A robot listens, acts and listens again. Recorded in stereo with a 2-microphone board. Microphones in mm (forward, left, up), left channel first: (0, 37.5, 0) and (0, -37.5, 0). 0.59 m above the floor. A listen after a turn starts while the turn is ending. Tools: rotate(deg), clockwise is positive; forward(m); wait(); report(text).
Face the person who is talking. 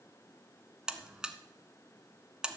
wait()
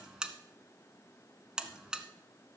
wait()
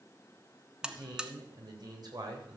rotate(65)
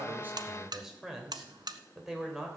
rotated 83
report("Facing the man speaking, 2 to 4 m away.")